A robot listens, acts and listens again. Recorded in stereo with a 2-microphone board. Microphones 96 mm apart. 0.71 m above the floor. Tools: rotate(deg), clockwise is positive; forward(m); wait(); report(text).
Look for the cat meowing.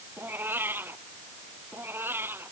rotate(25)
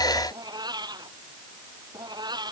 rotate(130)
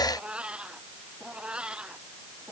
rotate(10)
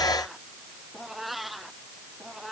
report("Found it: a cat meowing, straight ahead.")